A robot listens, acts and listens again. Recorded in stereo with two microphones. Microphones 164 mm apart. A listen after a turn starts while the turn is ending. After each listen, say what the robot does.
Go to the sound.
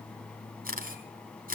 Turn 60° right.
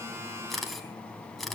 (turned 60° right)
Drive 1.0 m forward.
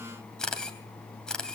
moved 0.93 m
Drive 1.0 m forward.
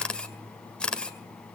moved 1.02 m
Drive 1.0 m forward.
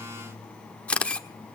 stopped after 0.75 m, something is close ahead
Turn 10° left.
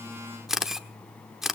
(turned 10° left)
Arrived at the camera shutter, straight ahead.